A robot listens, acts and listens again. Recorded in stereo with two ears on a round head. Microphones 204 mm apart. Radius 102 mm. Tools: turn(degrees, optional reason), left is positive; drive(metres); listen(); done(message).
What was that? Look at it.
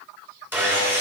turn(degrees=-30)
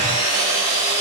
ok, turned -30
turn(degrees=-140, reason="So it is at 140° right.")
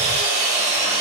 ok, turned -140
turn(degrees=-30, reason="The sawing is now 30° right.")
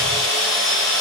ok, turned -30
turn(degrees=15, reason="The sawing is now 15° left.")
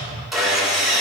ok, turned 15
done("Facing the sawing.")